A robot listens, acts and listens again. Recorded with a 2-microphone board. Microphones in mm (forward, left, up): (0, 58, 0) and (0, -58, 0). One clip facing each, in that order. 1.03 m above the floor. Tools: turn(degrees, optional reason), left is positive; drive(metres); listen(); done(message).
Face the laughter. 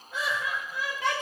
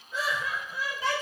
turn(degrees=65, reason="The laughter: about 65° left or 115° left.")
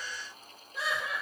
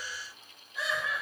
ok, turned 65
turn(degrees=60, reason="So it is at 60° left.")
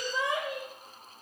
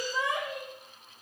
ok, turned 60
turn(degrees=20, reason="The laughter is now 20° left.")
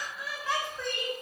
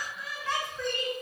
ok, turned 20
turn(degrees=10, reason="The laughter is now 10° left.")
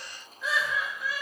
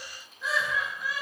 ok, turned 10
done("Found it: laughter, straight ahead.")